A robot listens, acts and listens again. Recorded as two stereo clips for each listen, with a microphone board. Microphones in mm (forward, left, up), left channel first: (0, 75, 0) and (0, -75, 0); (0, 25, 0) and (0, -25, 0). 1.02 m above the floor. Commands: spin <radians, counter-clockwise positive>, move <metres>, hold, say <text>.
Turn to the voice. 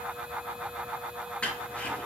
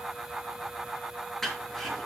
hold
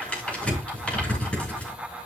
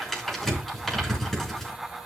hold
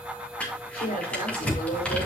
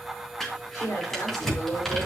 spin 1.57
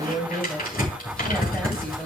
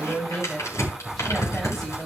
say Found it: a woman speaking, straight ahead, over 4 m away.